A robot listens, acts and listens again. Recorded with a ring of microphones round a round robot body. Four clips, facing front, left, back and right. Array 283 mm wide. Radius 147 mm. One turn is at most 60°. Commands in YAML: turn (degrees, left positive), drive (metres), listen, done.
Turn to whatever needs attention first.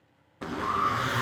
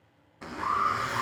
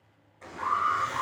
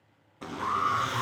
turn: 60
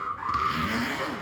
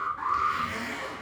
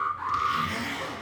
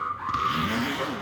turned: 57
turn: 60
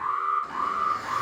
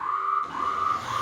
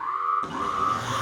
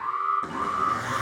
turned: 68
turn: 15
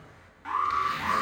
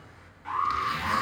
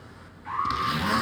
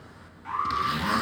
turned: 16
done: "Facing the alarm."